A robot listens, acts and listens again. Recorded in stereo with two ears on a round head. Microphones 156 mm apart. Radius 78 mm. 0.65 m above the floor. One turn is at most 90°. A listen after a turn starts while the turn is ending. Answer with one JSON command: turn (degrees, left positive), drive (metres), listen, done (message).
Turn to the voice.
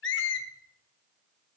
{"listen": true}
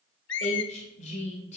{"turn": 40}
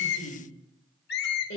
{"turn": 90}
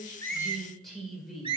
{"done": "Found it: a woman speaking, straight ahead."}